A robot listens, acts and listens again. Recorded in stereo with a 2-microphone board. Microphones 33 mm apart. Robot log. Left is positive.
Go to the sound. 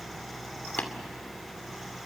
note: The tapping: about 60° left or 120° left.
cmd yaw +60
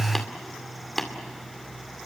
note: So it is at 15° left.
cmd yaw +15
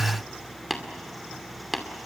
cmd fwd 1.0
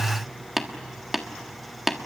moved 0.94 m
note: The tapping is now 10° right.
cmd yaw -10
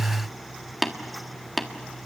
cmd fwd 1.0
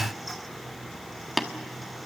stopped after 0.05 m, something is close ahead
end: Arrived at the tapping, straight ahead.